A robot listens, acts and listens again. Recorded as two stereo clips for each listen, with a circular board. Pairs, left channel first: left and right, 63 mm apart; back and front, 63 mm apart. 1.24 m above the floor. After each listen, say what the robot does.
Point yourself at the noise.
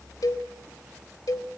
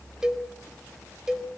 Turn 80° left.
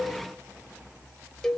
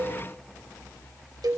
Found it: a cowbell, straight ahead.